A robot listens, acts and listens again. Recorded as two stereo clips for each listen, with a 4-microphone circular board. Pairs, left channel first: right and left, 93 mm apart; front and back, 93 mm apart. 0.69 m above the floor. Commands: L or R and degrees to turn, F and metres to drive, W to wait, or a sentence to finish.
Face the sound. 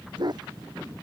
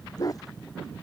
L50
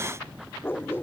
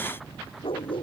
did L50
R25
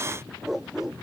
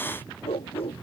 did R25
Found it: a dog barking, straight ahead.